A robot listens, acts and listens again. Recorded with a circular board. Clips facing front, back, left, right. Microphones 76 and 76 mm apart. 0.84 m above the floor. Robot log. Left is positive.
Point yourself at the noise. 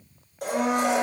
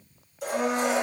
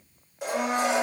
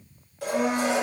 note: The blender: 20° left.
cmd yaw +20
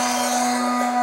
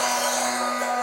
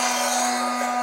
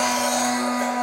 note: The blender is now 10° left.
cmd yaw +10
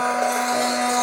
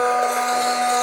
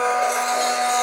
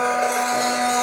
end: Found it: a blender, straight ahead.